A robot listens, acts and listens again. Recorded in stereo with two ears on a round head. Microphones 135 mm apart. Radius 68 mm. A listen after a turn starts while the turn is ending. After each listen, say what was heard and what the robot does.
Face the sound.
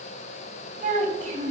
The child speaking: about 50° right or 130° right. Turn 50° right.
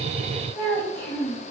So it is at 15° left. Turn 15° left.
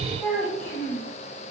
The child speaking is now 10° left. Turn 10° left.
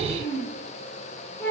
The child speaking is now 10° left. Turn 10° left.
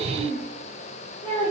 Found it: a child speaking, straight ahead, 2 to 4 m away.